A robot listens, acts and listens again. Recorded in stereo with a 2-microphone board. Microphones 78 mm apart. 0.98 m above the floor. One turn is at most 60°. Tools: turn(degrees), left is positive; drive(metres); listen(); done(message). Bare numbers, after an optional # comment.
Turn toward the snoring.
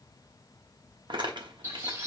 listen()
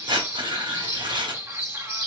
listen()
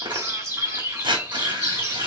done("I can't make out snoring, only a bird and tearing paper.")